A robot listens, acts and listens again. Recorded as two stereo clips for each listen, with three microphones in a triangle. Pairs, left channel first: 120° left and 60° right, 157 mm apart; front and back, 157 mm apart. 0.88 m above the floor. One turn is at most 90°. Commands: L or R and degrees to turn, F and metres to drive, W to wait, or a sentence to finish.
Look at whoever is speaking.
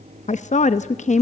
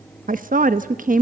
L90
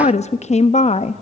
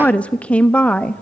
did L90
L80
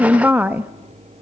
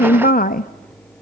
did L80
L20
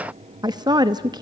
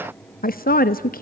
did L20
Found it: a woman speaking, straight ahead, under 1 m away.